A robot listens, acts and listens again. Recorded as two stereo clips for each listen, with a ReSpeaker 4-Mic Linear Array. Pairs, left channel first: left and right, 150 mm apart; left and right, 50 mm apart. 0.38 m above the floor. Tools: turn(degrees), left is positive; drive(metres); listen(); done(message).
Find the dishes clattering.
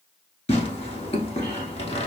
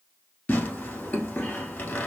listen()
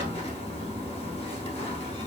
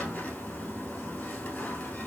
listen()
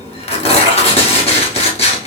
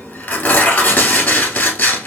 done("I can't make out dishes clattering, only tearing paper.")